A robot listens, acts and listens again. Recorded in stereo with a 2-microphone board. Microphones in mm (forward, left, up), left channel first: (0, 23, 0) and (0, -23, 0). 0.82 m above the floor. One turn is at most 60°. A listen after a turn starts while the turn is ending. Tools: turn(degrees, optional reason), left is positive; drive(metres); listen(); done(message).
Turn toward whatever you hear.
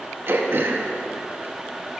turn(degrees=-55, reason="The throat clearing: about 55° right or 125° right.")
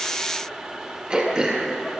turn(degrees=-25, reason="So it is at 25° right.")
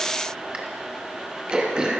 turn(degrees=-25, reason="The throat clearing is now 25° right.")
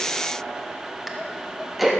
done("Facing the throat clearing, 1 to 2 m away.")